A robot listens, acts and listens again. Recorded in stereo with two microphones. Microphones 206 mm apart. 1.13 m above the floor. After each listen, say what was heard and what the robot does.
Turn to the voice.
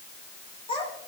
The child speaking: about 25° left or 155° left. Turn 25° left.
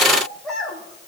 Facing the child speaking, over 4 m away.